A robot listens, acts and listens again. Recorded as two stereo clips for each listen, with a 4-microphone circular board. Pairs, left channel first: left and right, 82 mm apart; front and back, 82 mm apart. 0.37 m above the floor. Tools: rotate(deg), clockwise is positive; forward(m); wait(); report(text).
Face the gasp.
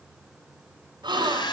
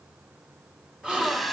rotate(100)
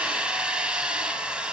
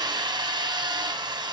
report("I heard a gasp from this way, but can't make it out now.")